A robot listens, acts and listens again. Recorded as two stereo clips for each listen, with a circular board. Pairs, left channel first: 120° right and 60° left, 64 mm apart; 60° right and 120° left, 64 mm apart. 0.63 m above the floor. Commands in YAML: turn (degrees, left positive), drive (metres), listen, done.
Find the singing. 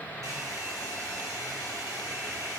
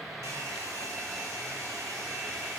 listen: true
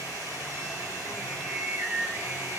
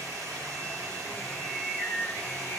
done: "Facing the singing."